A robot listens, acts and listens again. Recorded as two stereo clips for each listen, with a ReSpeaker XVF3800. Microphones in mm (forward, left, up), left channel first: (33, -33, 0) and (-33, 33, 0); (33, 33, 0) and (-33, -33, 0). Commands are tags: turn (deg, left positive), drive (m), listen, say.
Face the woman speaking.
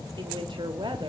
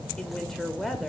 <turn deg="135"/>
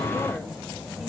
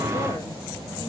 <listen/>
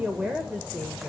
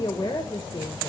<turn deg="65"/>
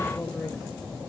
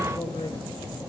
<turn deg="35"/>
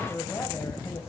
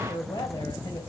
<turn deg="10"/>
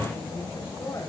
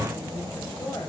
<listen/>
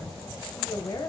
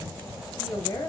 <say>Facing the woman speaking, 2 to 4 m away.</say>